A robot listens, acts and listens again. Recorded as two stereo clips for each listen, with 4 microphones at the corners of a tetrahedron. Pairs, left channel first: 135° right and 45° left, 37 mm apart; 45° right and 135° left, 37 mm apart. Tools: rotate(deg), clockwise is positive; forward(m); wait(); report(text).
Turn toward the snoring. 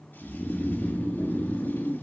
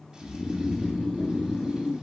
rotate(100)
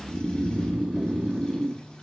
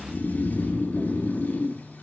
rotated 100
rotate(15)
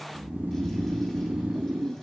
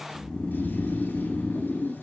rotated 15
report("Found it: snoring, straight ahead, 1 to 2 m away.")